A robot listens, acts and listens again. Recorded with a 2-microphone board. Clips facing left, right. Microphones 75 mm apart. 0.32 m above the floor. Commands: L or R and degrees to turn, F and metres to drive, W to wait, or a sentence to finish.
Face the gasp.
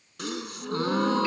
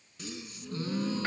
L70
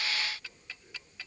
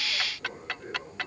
W
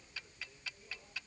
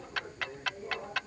I heard a gasp, but can't make it out now. It was about straight ahead or 40° left.